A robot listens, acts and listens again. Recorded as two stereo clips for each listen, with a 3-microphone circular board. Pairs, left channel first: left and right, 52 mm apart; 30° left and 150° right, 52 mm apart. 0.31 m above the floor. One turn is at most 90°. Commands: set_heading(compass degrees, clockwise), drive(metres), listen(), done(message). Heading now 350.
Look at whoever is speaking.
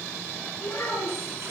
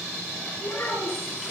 set_heading(290)
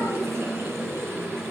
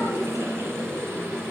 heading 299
set_heading(289)
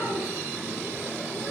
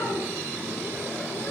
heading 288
listen()
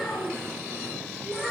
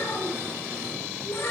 done("Found it: a child speaking, straight ahead.")